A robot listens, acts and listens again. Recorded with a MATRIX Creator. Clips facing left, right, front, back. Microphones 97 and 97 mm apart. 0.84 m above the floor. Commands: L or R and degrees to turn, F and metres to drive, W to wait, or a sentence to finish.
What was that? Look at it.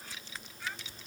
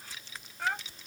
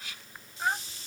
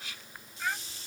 R55
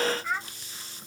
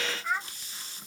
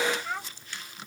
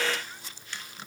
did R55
Found it: a child speaking, straight ahead.